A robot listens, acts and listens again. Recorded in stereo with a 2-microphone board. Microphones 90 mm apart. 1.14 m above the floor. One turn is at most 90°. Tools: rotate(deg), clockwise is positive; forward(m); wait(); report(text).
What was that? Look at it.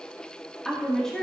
rotate(-30)
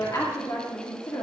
rotate(-90)
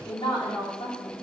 rotate(-70)
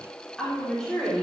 report("Found it: a woman speaking, straight ahead, 2 to 4 m away.")